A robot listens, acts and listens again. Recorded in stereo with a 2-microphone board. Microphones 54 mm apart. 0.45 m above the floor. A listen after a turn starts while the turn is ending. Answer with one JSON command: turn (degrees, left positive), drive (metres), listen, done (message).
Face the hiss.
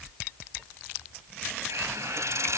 {"turn": -70}
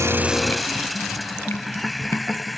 {"done": "Facing the hiss."}